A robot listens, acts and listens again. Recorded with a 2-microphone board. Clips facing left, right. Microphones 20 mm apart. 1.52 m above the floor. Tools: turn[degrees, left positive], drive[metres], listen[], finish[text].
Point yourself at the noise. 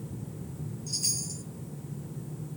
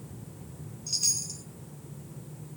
Thought: The chime: about 35° right or 145° right.
Action: turn[-35]
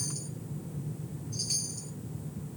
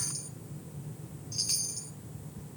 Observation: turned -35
Thought: So it is at 105° right.
Action: turn[-105]
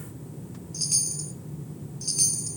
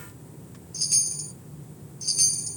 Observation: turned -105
Action: finish[Found it: a chime, straight ahead, 2 to 4 m away.]